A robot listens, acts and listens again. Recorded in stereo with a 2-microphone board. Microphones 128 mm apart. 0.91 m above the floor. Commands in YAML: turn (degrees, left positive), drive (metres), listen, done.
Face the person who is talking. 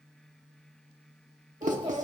turn: -45
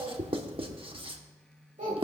turn: -90
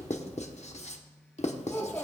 turn: 20
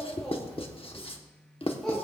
done: "Facing the child speaking, 2 to 4 m away."